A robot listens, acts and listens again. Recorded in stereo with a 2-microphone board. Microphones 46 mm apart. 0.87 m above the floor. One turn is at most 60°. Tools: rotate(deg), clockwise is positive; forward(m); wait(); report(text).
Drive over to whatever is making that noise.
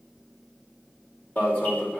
rotate(-40)
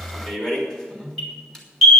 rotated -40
rotate(-10)
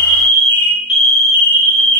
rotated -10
forward(1.0)
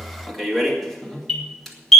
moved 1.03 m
rotate(-10)
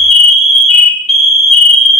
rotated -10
forward(1.0)
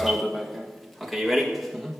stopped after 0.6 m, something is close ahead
report("Arrived at the alarm, straight ahead.")